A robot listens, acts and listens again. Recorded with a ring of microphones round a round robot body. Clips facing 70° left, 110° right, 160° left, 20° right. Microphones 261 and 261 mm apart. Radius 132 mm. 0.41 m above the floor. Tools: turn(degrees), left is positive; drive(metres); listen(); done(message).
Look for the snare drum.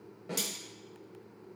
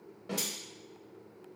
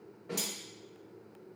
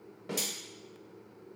turn(degrees=-25)
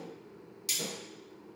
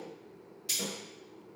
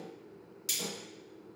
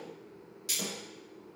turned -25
listen()
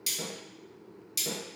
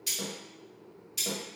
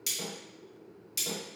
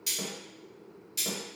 listen()
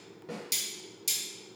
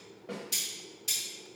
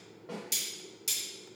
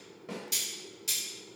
done("Found it: a snare drum, straight ahead.")